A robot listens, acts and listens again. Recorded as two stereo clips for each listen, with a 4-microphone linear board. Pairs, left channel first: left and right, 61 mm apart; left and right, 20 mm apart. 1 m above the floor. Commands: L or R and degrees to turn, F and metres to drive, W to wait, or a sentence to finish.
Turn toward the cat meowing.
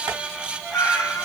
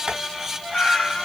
L50
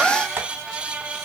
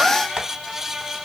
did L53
W
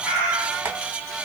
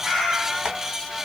R20
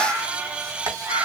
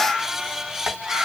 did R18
R45
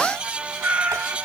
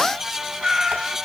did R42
R30
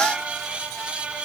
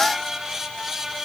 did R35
W
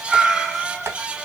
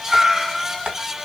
Found it: a cat meowing, straight ahead.